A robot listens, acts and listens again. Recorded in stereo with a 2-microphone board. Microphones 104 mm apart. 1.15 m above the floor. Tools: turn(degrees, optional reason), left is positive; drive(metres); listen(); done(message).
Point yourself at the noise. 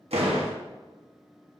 turn(degrees=-90)
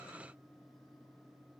done("Facing where the door slam came from. I can't hear it now.")